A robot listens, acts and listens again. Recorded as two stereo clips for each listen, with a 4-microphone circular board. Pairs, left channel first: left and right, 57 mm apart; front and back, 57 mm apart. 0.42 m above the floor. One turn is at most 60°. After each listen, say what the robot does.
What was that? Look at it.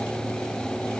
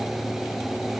Keep listening.
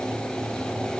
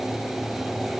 Keep listening.
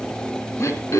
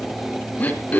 Turn 60° left.
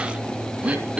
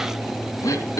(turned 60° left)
Turn 20° right.
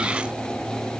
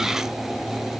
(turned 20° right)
Keep listening.
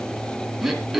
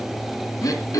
Facing the throat clearing, 2 to 4 m away.